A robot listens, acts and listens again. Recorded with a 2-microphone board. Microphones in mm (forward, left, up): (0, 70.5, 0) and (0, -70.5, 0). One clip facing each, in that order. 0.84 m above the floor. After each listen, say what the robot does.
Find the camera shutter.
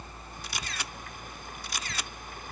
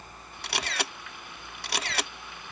Turn 75° right.
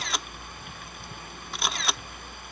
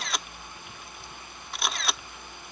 Found it: a camera shutter, straight ahead.